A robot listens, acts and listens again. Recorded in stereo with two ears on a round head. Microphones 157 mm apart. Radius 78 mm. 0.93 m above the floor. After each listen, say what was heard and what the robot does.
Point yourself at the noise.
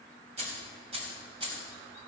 The keys jangling: about 30° right or 150° right. Turn 30° right.
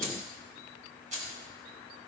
The keys jangling: about 45° right or 135° right. Turn 45° right.
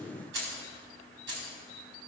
So it is at 110° right. Turn 110° right.
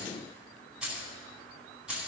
Found it: keys jangling, straight ahead.